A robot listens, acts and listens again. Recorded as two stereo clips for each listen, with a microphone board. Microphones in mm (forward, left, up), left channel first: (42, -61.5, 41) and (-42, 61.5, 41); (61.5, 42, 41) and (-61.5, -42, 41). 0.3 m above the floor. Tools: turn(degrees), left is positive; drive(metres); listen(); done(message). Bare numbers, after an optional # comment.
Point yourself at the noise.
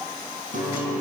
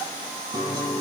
# The guitar: 150° left.
turn(150)
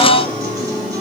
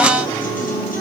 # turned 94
# The guitar is now 60° left.
turn(60)
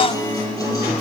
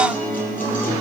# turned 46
# The guitar is now 10° left.
turn(10)
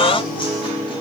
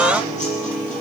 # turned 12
done("Found it: a guitar, straight ahead, over 4 m away.")